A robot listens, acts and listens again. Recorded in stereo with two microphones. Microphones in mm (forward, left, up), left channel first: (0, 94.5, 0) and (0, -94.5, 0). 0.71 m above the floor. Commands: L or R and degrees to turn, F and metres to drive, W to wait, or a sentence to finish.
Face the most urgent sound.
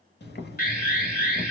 L50
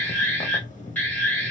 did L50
L10
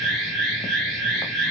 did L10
Found it: an alarm, straight ahead.